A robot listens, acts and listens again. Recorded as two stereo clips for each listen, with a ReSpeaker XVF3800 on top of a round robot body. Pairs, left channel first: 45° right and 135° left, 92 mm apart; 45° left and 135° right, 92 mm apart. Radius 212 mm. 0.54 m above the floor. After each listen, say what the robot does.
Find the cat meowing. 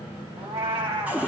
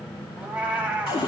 Turn 150° left.
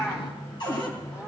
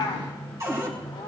Turn 10° left.
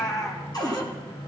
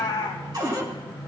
Found it: a cat meowing, straight ahead.